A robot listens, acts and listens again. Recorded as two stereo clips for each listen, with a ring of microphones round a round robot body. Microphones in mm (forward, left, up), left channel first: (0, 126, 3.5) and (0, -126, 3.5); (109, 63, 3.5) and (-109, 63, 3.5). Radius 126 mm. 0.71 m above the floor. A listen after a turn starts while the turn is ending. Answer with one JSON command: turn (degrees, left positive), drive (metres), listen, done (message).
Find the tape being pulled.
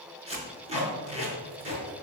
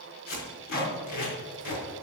{"turn": -25}
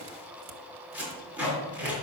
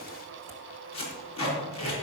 {"done": "Found it: tape being pulled, straight ahead."}